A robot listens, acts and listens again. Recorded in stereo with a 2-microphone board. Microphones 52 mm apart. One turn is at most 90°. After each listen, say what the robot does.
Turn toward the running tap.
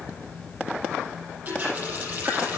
Turn 35° right.
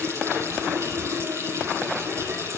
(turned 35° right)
Turn 90° right.
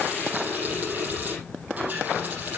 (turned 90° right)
Turn 30° right.
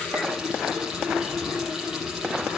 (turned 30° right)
Turn 10° right.
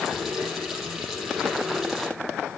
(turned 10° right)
Facing the running tap, over 4 m away.